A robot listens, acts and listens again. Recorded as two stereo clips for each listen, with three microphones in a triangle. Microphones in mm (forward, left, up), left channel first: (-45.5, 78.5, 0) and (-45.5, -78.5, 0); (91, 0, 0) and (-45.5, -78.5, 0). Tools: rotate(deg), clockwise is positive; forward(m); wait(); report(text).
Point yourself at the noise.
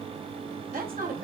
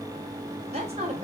rotate(105)
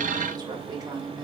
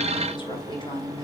rotate(25)
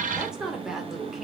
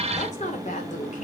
report("Found it: a woman speaking, straight ahead.")